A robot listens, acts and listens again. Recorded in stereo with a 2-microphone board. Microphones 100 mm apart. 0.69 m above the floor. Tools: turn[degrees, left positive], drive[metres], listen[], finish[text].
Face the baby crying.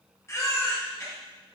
Thought: The baby crying: about 30° left or 150° left.
Action: turn[30]
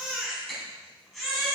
Action: finish[Facing the baby crying.]